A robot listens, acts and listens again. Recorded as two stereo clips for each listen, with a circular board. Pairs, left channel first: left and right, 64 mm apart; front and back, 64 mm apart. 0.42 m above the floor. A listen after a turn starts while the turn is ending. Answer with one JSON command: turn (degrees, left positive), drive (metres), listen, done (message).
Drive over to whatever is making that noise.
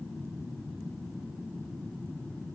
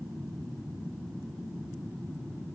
{"listen": true}
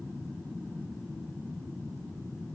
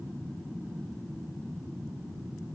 {"listen": true}
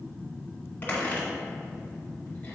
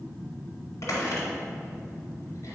{"turn": 35}
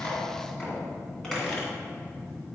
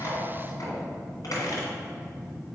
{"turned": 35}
{"drive": 1.0}
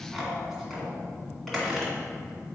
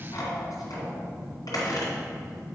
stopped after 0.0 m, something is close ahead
{"done": "Something is in my way. I am facing the squeak but have not reached it."}